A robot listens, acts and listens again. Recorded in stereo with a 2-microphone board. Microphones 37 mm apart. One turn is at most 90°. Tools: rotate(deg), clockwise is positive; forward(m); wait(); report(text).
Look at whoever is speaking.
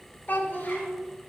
rotate(-50)
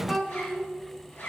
rotate(-10)
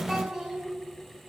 report("Facing the child speaking.")